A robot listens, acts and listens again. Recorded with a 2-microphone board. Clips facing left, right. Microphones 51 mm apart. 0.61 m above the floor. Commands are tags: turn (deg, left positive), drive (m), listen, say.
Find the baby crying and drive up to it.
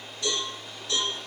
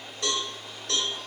<listen/>
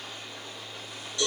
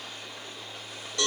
<listen/>
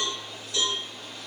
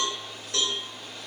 <say>I can't make out a baby crying to turn to.</say>